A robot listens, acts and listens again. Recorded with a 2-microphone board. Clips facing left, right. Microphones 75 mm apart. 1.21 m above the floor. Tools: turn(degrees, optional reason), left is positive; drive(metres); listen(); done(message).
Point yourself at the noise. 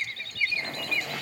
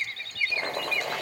turn(degrees=-60, reason="The boiling: about 60° right or 120° right.")
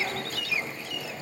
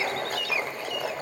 turn(degrees=-55, reason="So it is at 55° right.")
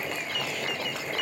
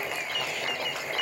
done("Found it: boiling, straight ahead, over 4 m away.")